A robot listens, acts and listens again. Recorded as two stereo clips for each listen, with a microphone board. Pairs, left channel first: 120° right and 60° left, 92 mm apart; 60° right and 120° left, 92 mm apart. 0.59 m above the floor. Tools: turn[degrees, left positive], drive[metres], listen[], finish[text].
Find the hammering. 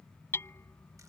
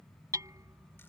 Thought: The hammering: 175° left.
Action: turn[175]
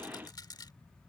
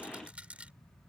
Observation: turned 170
Action: listen[]
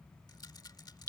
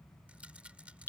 Action: finish[Facing the hammering.]